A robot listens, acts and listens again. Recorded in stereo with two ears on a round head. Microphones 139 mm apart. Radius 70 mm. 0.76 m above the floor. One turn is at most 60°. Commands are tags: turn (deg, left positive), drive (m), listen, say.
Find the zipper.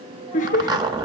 <turn deg="-25"/>
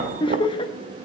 <listen/>
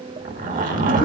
<turn deg="-60"/>
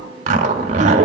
<turn deg="-45"/>
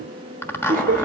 <turn deg="15"/>
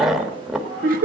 <say>Found it: a zipper, straight ahead, 1 to 2 m away.</say>